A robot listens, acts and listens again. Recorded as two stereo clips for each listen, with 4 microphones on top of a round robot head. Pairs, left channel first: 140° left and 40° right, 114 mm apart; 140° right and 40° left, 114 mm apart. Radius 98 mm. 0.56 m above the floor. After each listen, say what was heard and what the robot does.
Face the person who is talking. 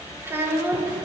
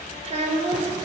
The child speaking: 30° left. Turn 30° left.
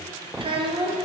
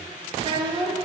Facing the child speaking.